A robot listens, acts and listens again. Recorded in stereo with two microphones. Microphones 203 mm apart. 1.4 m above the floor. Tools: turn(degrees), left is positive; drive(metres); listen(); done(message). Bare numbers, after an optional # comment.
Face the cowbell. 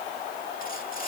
listen()
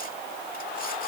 listen()
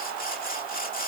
done("I can't make out a cowbell, only sawing.")